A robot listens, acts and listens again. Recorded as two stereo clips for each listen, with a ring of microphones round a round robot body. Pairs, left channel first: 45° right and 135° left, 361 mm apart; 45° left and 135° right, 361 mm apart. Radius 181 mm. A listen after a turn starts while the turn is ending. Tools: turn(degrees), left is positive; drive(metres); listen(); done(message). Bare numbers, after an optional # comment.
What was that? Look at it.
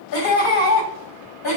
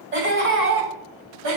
# The laughter: 90° right.
turn(-90)
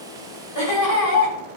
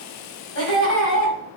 # The laughter is now 10° right.
turn(-10)
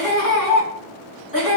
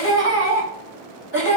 # The laughter is now 10° right.
turn(-10)
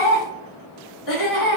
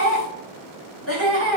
# The laughter is now 10° right.
turn(-10)
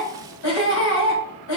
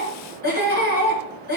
done("Facing the laughter.")